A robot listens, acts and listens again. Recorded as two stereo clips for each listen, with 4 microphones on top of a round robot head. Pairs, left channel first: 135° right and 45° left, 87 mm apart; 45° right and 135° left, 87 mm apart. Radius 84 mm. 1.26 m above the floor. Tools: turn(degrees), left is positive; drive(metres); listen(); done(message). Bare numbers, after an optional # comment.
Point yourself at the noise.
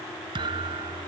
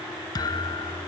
done("Found it: a thud, straight ahead.")